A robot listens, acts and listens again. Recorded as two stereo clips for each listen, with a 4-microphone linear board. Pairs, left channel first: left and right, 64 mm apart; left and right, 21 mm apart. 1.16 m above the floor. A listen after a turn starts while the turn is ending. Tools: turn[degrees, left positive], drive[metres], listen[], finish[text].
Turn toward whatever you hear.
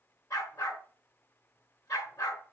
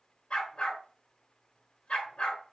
Thought: The dog barking: about 65° left or 115° left.
Action: turn[65]
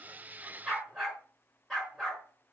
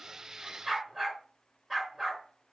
Action: finish[Found it: a dog barking, straight ahead, over 4 m away.]